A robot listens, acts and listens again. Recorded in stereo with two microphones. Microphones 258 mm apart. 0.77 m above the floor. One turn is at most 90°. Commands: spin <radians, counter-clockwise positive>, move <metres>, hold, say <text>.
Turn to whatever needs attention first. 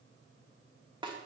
hold
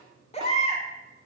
spin 0.44
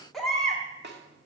say Found it: a baby crying, straight ahead, 1 to 2 m away.